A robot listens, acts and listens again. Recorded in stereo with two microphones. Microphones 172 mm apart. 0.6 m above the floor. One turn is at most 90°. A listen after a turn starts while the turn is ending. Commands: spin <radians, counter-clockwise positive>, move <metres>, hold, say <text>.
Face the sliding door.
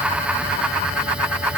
hold
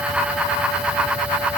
hold
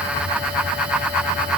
say I can't make out a sliding door.